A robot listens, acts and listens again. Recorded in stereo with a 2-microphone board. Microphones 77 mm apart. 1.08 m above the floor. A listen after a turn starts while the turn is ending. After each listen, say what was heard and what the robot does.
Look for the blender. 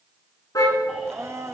The blender: about 35° right or 145° right. Turn 35° right.
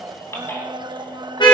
So it is at 110° right. Turn 110° right.
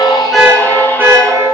Keep listening.
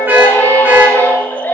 Keep listening.
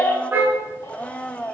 The blender is now 15° left. Turn 15° left.
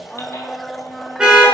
Facing the blender, under 1 m away.